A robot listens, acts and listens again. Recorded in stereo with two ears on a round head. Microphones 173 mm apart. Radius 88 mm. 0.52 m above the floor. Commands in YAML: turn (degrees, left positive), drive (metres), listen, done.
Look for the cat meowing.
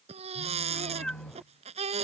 turn: 30
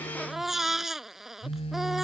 listen: true
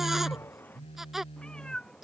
turn: 30
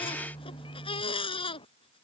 turn: 155
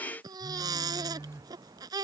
turn: -15
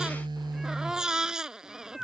done: "Facing the cat meowing."